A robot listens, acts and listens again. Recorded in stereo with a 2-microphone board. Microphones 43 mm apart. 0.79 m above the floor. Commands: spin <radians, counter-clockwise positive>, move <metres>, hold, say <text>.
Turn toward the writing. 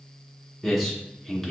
hold
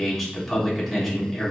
hold
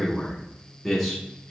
say I can't make out writing to turn to.